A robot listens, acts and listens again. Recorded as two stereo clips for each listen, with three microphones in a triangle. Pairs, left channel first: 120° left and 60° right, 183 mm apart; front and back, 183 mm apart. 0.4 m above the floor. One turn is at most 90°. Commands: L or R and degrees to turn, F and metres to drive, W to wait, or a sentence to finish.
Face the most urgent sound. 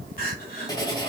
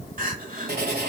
L90
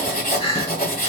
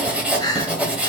L65
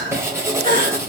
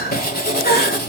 R20
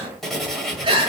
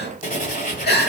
Found it: crying, straight ahead, 1 to 2 m away.